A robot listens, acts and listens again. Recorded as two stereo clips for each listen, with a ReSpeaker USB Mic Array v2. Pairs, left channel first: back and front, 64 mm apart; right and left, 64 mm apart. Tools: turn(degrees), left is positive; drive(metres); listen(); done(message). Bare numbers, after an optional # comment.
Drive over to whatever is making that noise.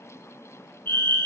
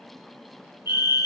# The fire alarm: 130° left.
turn(130)
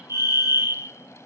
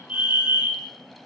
# The fire alarm is now 25° left.
turn(25)
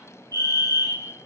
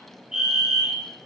drive(1.0)
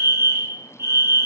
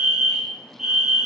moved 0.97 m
# The fire alarm is now 10° left.
turn(10)
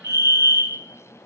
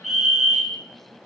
drive(1.0)
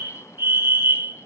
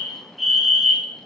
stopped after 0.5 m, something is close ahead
done("I am next to the fire alarm.")